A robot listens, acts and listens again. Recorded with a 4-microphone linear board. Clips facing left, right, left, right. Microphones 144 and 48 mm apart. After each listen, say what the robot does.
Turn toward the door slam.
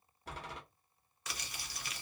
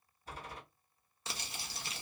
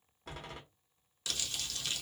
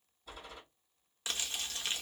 Turn 70° left.
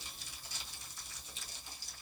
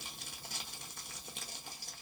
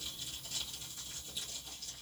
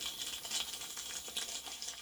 Keep listening.
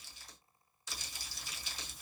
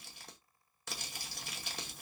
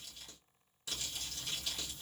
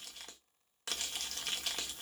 I heard a door slam, but can't make it out now. It was about straight ahead or 40° left.